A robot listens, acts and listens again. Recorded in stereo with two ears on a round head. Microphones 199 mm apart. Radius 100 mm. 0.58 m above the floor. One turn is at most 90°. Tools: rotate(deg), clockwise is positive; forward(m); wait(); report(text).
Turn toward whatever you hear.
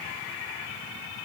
wait()
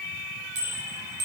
rotate(90)
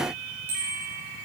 rotate(10)
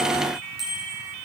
report("Facing the bicycle bell.")